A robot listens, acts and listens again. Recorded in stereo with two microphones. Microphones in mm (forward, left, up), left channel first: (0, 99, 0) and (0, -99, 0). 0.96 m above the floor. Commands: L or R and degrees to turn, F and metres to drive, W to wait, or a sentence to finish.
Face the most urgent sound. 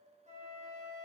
W
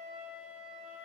W
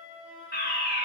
L55
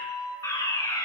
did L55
L20
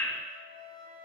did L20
L10
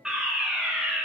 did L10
Found it: a fire alarm, straight ahead, 2 to 4 m away.